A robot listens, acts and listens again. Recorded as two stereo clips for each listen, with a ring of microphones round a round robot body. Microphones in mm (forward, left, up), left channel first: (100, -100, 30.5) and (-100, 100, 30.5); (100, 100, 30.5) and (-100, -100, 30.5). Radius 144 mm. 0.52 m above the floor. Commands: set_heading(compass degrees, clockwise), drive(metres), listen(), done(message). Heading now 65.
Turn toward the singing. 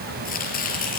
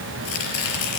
listen()
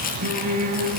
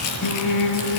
set_heading(0)
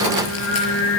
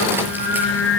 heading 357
done("Found it: singing, straight ahead.")